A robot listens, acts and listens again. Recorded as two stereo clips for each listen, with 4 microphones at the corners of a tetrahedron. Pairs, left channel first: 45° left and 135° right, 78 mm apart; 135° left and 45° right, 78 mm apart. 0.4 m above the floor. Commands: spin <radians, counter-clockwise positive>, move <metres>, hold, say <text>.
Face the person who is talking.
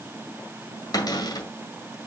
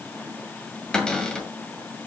hold
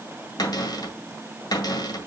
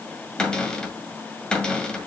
hold
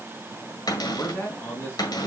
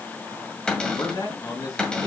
spin 1.83
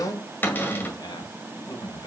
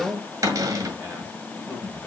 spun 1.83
spin 0.44
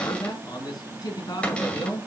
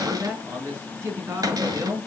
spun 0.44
spin 0.17
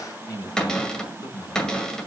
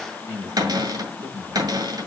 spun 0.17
say Found it: a man speaking, straight ahead.